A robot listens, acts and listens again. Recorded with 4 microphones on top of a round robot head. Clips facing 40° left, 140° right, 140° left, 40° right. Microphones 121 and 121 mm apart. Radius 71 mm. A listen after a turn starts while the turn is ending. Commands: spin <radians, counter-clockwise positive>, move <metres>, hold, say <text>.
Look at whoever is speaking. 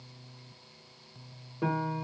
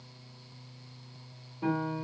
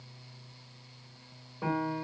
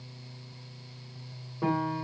hold
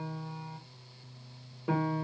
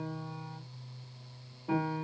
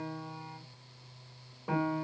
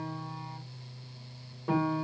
hold
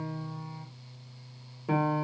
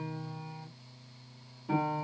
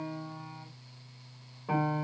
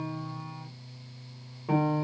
say I can't make out anyone speaking, only a piano.